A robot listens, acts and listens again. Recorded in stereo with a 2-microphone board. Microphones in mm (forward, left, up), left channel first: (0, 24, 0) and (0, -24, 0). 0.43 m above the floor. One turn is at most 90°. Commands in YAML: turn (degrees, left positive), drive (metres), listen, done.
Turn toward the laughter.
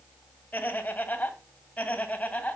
turn: 35
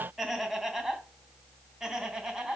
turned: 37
turn: -10
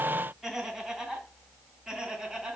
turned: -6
turn: -10
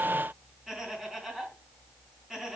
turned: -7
done: "Found it: laughter, straight ahead, 2 to 4 m away."